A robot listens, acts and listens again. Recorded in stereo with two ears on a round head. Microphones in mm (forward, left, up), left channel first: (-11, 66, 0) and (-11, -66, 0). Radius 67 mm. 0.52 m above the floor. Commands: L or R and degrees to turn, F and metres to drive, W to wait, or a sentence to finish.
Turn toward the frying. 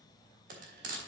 R65
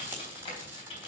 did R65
R15
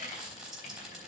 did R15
Found it: frying, straight ahead.